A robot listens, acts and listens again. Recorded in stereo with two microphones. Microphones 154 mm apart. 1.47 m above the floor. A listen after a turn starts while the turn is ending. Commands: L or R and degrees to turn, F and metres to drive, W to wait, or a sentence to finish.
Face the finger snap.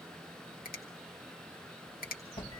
L70
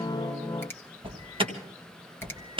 L15
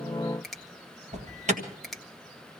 Facing the finger snap.